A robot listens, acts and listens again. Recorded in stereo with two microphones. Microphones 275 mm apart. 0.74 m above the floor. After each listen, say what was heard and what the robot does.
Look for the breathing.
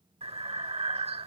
The breathing: about 20° right or 160° right. Turn 20° right.
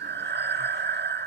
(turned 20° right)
So it is at 135° right. Turn 135° right.
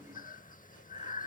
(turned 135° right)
The breathing is now 35° left. Turn 35° left.
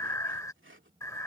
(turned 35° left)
The breathing is now 10° left. Turn 10° left.
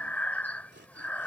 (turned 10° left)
Facing the breathing.